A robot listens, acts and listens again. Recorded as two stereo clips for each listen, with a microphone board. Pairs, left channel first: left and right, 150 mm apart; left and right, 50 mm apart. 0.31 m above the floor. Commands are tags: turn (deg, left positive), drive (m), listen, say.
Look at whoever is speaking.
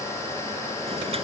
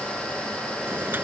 <listen/>
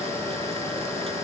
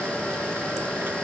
<listen/>
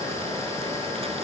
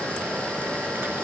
<say>I can't make out anyone speaking to turn to.</say>